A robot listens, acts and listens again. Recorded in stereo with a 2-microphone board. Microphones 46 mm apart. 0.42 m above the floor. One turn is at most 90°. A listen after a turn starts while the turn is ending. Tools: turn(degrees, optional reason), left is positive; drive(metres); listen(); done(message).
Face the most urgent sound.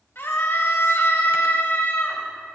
turn(degrees=60, reason="The scream: about 60° left or 120° left.")
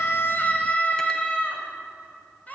turn(degrees=40, reason="So it is at 40° left.")
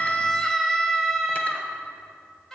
turn(degrees=15, reason="The scream is now 15° left.")
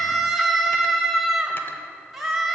done("Facing the scream.")